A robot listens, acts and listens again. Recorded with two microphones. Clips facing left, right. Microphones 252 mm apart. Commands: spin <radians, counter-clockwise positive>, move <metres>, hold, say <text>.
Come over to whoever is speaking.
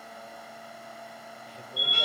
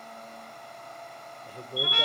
spin -0.87
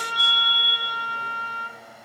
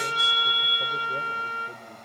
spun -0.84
hold
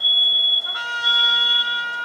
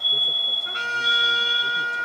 hold
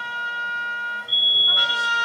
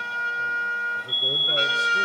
say I heard a man speaking, but can't make it out now. It was about straight ahead or 85° right. I did not reach it.